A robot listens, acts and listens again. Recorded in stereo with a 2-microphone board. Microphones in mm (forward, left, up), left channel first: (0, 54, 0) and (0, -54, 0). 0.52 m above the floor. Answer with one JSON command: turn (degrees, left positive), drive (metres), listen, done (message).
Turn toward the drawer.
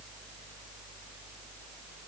{"listen": true}
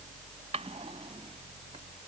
{"turn": -90}
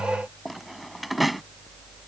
{"done": "Found it: a drawer, straight ahead."}